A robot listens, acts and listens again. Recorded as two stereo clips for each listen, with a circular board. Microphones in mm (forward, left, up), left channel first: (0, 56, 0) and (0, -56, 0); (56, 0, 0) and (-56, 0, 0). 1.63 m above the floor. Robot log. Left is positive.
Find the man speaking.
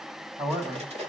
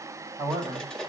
note: The man speaking: 120° right.
cmd yaw -120
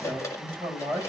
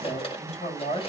note: The man speaking is now 10° right.
cmd yaw -10
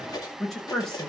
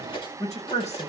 end: Found it: a man speaking, straight ahead, over 4 m away.